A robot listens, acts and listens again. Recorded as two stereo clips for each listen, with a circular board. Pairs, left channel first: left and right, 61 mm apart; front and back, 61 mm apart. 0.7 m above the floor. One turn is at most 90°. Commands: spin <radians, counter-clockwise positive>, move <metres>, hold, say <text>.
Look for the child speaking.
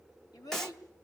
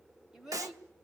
spin 1.57
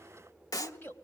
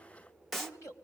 spin 0.61
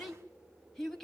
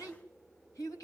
say Facing the child speaking, 2 to 4 m away.